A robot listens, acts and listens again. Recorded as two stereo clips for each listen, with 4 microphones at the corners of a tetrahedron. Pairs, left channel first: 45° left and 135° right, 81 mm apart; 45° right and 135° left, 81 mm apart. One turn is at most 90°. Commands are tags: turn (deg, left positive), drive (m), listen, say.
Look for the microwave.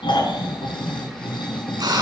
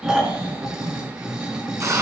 <listen/>
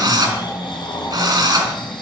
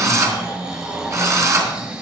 <listen/>
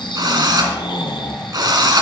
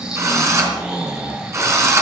<say>I can't make out a microwave, only snoring and a drill.</say>